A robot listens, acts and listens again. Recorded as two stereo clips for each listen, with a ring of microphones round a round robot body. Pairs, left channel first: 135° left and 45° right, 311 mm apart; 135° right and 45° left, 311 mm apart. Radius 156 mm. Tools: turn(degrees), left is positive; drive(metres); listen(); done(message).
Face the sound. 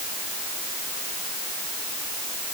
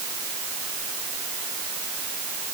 listen()
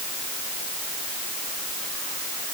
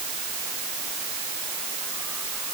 listen()
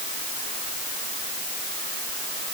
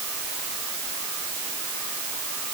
done("I can't make out anything.")